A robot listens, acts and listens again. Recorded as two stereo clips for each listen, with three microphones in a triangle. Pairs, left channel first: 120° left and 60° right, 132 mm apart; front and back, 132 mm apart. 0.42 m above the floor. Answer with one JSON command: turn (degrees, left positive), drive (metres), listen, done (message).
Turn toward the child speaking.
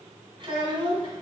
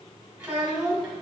{"turn": -95}
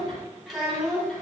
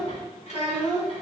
{"turn": 35}
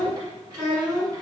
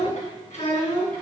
{"done": "Facing the child speaking, 2 to 4 m away."}